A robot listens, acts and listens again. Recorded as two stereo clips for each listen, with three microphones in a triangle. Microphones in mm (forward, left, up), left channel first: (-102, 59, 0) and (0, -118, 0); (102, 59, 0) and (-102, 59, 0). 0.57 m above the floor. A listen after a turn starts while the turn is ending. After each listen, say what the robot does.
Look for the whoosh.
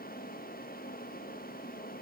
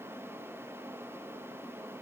Keep listening.
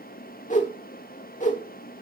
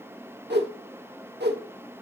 Turn 165° left.
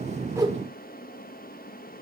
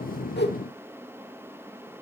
Keep listening.
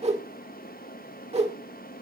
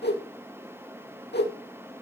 Turn 10° right.
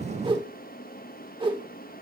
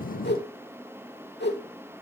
Found it: a whoosh, straight ahead, 1 to 2 m away.